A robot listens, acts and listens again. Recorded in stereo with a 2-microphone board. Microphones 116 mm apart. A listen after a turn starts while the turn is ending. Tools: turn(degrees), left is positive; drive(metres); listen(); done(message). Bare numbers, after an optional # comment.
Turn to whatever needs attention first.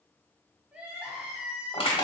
turn(-30)
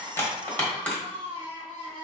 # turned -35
# So it is at 135° right.
turn(-135)
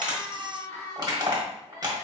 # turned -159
# The crying is now 25° left.
turn(25)
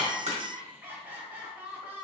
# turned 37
# The crying is now 15° right.
turn(-15)
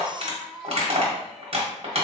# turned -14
done("Found it: crying, straight ahead, under 1 m away.")